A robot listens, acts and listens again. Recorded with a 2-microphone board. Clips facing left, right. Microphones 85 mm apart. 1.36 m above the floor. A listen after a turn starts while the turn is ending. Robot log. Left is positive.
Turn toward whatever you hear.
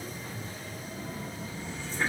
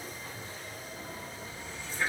note: The running tap: about 30° left or 150° left.
cmd yaw +30
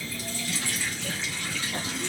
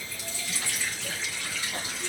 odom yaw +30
note: So it is at 120° left.
cmd yaw +120
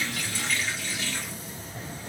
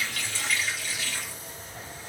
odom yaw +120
end: Found it: a running tap, straight ahead, 2 to 4 m away.